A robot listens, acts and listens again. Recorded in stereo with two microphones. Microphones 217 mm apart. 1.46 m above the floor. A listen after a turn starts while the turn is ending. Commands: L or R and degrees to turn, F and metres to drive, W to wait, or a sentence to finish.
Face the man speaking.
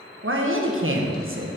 R70
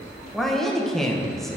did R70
Found it: a man speaking, straight ahead.